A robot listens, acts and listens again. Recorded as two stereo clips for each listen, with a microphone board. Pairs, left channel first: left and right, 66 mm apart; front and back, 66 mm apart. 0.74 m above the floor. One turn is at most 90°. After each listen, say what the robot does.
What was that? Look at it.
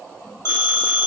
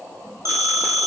Turn 90° left.
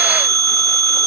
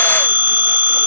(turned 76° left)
Turn 65° left.
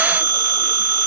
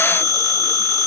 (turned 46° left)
Turn 20° left.
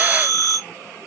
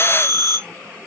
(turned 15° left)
Found it: a phone ringing, straight ahead.